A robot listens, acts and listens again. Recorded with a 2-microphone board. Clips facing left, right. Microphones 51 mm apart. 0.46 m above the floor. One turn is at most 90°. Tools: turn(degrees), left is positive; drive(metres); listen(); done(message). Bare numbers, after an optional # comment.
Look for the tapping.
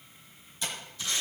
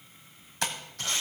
# The tapping: about 70° right or 110° right.
turn(-70)
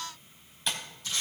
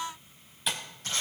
done("Facing the tapping.")